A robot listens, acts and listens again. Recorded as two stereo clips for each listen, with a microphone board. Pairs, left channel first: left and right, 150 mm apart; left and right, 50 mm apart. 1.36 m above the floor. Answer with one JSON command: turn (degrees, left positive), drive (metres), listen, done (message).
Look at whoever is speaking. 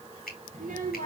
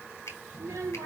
{"turn": -65}
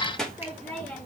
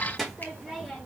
{"turn": 10}
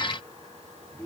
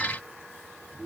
{"turn": 10}
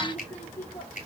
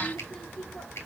{"turn": 15}
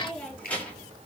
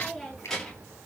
{"turn": 15}
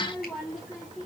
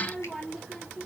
{"done": "Found it: a child speaking, straight ahead."}